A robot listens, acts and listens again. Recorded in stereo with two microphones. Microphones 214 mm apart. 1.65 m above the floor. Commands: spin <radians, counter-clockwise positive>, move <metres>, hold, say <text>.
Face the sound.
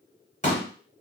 spin 0.61
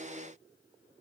hold
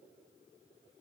say I heard a pop, but can't make it out now. It was about straight ahead or 110° left.